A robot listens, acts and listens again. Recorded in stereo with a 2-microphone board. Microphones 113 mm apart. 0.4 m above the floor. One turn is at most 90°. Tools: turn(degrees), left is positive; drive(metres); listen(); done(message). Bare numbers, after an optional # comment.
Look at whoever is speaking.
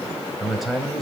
turn(30)
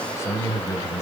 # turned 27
# So it is at 150° left.
turn(90)
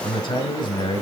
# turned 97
# The man speaking is now 55° left.
turn(55)
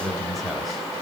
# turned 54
done("Facing the man speaking.")